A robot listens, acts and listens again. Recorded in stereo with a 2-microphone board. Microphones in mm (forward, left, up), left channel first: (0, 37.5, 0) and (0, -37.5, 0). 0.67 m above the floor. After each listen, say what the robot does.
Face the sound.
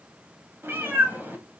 Turn 25° right.
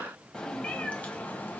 Turn 25° left.
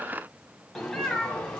Turn 15° left.
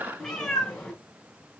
Turn 10° left.
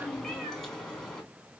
Facing the cat meowing, 2 to 4 m away.